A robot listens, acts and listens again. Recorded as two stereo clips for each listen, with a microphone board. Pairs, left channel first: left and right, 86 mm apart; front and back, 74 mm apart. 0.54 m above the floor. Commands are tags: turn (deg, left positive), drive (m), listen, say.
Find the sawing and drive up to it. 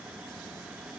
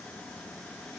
<listen/>
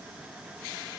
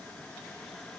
<listen/>
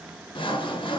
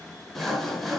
<turn deg="90"/>
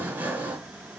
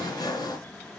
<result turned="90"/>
<turn deg="-15"/>
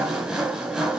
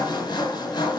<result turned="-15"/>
<drive m="1.0"/>
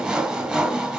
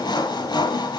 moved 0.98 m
<drive m="1.0"/>
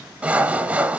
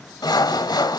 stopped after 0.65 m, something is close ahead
<turn deg="-10"/>
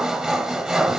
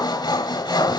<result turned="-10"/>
<say>I am next to the sawing.</say>